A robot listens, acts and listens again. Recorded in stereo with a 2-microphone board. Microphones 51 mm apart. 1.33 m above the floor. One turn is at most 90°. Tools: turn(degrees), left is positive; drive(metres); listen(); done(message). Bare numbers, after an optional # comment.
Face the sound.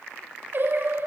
# The singing: about 45° right or 135° right.
turn(-45)
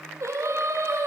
# So it is at 80° right.
turn(-80)
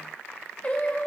# The singing is now 30° left.
turn(30)
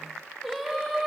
done("Facing the singing, over 4 m away.")